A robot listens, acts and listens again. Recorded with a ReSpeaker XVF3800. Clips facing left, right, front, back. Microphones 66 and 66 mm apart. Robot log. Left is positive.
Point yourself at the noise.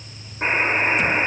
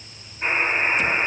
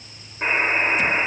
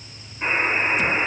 note: The buzzer: 60° left.
cmd yaw +60
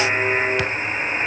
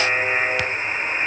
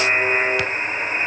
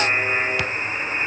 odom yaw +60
note: The buzzer is now 15° left.
cmd yaw +15
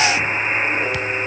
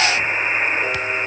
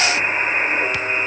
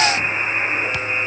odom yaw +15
end: Facing the buzzer, 2 to 4 m away.